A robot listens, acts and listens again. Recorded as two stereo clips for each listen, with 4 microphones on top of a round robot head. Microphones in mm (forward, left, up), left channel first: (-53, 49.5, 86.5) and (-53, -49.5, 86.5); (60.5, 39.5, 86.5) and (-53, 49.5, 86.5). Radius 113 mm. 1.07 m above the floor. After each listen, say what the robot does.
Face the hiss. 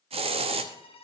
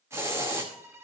Turn 115° right.
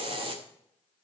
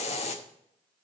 Turn 45° right.
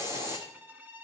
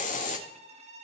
Turn 20° right.
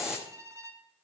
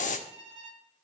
Found it: a hiss, straight ahead, under 1 m away.